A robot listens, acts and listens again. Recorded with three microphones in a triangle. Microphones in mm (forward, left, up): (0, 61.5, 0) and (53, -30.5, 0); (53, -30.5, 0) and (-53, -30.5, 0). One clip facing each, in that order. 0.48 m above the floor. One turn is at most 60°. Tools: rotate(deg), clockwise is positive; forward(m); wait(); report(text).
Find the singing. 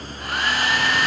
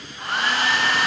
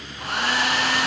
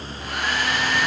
wait()
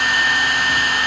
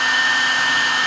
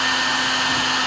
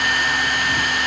wait()
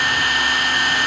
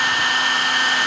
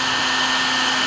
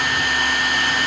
report("I can't make out singing to turn to.")